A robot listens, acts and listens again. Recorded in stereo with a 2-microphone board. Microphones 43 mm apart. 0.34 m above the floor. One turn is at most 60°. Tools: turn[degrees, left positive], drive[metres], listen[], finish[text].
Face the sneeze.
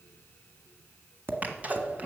Thought: The sneeze: about 35° right or 145° right.
Action: turn[-35]
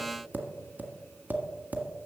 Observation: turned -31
Action: listen[]
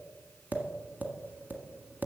Action: finish[I heard a sneeze, but can't make it out now. It was about 5° right or 115° right.]